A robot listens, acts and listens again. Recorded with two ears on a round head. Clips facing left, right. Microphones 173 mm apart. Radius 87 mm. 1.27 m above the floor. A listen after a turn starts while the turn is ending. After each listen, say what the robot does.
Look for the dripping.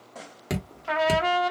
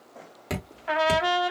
Turn 30° left.
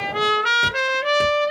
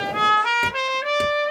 Keep listening.
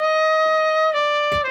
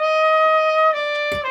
Keep listening.
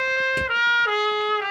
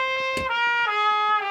I heard dripping, but can't make it out now. It was about 20° right or 140° left.